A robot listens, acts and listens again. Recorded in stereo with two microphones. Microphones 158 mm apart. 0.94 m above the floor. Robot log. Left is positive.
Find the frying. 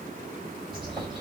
cmd idle
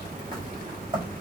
cmd idle
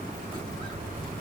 end: I can't make out frying, only a bird.